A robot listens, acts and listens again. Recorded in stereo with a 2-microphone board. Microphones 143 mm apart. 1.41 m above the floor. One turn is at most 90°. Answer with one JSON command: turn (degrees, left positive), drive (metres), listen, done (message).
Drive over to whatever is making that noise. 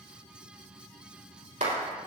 {"turn": -65}
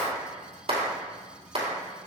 {"turn": -50}
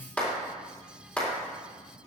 {"turn": 10}
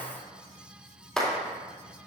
{"drive": 1.0}
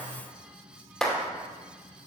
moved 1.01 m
{"drive": 1.0}
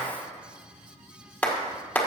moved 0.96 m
{"turn": 10}
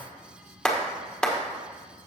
{"drive": 1.0}
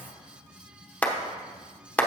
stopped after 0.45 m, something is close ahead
{"turn": 10}
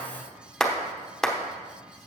{"done": "Arrived at the clap, straight ahead."}